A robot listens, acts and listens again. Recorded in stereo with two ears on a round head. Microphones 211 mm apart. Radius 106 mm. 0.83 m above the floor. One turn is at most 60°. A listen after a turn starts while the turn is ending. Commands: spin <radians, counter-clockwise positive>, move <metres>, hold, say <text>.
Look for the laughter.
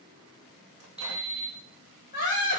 spin 0.79
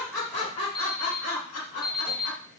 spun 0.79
spin 1.05
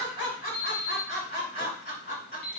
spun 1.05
spin 0.61
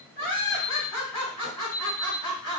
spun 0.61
say Found it: laughter, straight ahead.